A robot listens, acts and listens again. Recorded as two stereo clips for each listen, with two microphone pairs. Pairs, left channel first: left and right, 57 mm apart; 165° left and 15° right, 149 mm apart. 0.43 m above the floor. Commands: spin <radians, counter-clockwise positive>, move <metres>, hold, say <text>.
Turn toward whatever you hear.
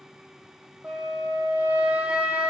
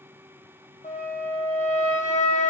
spin -2.79
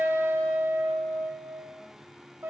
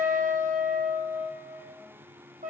spin -0.87
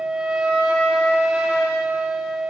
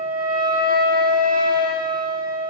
spin -0.26
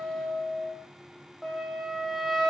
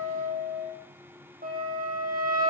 say Found it: a flute, straight ahead, 2 to 4 m away.